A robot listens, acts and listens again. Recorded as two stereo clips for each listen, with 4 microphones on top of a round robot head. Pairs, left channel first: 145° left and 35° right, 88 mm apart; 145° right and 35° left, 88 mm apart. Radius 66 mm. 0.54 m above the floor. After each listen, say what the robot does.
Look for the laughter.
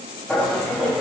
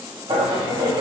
Turn 60° left.
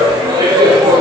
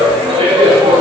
Turn 10° left.
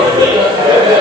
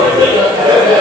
Found it: laughter, straight ahead, 2 to 4 m away.